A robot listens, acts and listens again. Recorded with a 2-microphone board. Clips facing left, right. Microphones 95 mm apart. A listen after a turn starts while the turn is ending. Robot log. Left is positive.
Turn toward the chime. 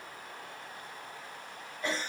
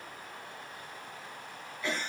cmd idle
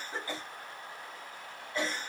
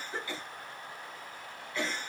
cmd idle
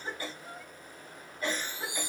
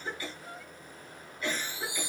note: The chime: about 55° left or 125° left.
cmd yaw +55
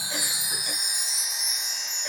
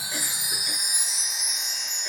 end: Found it: a chime, straight ahead, 1 to 2 m away.